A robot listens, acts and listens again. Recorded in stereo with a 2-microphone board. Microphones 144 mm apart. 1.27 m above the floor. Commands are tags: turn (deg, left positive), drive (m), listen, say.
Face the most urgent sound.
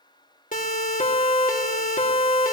<turn deg="65"/>
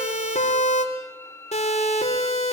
<turn deg="50"/>
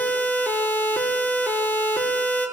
<turn deg="15"/>
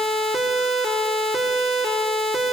<say>Facing the siren.</say>